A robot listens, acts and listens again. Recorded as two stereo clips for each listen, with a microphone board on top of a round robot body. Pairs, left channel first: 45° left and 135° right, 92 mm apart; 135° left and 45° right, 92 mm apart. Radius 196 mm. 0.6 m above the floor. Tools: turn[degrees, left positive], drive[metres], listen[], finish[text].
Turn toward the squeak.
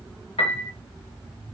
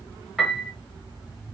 Action: listen[]
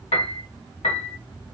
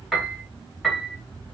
Action: listen[]
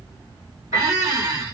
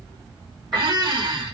Thought: The squeak: 80° right.
Action: turn[-80]
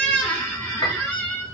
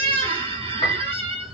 Thought: The squeak is now 30° right.
Action: turn[-30]
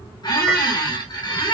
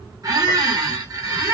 Action: finish[Found it: a squeak, straight ahead.]